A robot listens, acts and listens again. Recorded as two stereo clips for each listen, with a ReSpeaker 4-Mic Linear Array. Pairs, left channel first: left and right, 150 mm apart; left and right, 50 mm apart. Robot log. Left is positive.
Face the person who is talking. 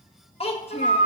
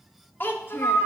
note: The child speaking: about 40° left or 140° left.
cmd yaw +40
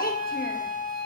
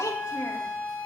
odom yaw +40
cmd idle
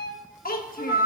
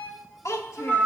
note: So it is at 100° left.
cmd yaw +100
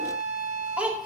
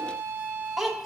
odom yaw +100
note: The child speaking is now 10° right.
cmd yaw -10
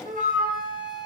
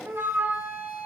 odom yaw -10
cmd idle
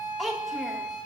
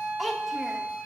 end: Found it: a child speaking, straight ahead, 1 to 2 m away.